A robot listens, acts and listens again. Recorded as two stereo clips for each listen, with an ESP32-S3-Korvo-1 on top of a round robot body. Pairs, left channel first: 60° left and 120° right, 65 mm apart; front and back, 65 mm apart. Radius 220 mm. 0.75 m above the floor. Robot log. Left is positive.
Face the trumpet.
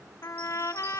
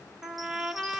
note: The trumpet: 100° left.
cmd yaw +100
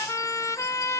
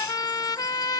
note: The trumpet is now 20° left.
cmd yaw +20
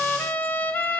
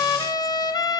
end: Found it: a trumpet, straight ahead, 1 to 2 m away.